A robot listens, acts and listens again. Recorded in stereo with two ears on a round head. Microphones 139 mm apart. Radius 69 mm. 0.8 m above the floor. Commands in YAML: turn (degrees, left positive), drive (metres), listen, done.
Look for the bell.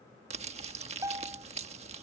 turn: -20
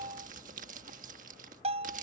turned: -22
turn: -135
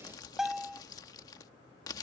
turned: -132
done: "Facing the bell."